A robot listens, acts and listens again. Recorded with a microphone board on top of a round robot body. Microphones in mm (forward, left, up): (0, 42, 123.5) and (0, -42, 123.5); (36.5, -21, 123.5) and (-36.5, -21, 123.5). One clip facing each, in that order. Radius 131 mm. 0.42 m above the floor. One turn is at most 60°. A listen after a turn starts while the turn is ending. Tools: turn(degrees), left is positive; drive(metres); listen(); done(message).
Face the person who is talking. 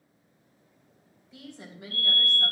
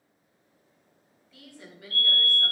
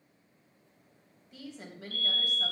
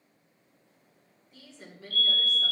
turn(degrees=25)
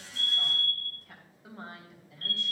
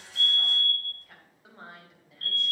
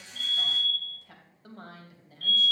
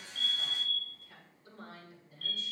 done("Facing the woman speaking, 2 to 4 m away.")